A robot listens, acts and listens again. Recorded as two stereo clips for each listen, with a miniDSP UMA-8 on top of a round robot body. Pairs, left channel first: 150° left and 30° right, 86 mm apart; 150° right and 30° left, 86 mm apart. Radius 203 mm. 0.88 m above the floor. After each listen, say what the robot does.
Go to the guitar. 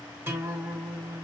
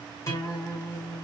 Turn 95° right.
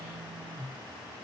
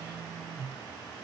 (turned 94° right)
Drive 1.0 m forward.
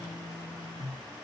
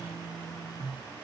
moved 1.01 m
Drive 1.0 m forward.
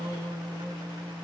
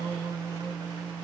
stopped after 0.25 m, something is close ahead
Arrived at the guitar, straight ahead.